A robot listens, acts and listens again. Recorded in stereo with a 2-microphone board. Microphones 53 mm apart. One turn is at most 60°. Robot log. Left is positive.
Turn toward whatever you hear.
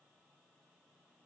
cmd idle
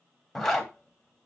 cmd yaw +30
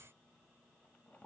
cmd idle
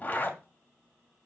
note: So it is at 145° left.
cmd yaw +60
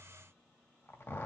note: The zipper is now 115° left.
cmd yaw +60
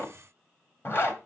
note: The zipper is now 60° left.
cmd yaw +60
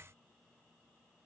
cmd idle
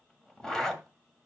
note: The zipper is now 15° left.
cmd yaw +15
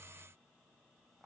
cmd idle
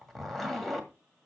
end: Facing the zipper.